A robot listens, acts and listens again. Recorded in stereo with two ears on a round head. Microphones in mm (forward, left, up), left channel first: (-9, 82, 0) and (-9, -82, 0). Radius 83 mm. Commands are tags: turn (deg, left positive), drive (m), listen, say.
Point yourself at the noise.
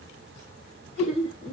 <turn deg="-90"/>
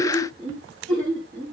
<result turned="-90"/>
<say>Facing the laughter, over 4 m away.</say>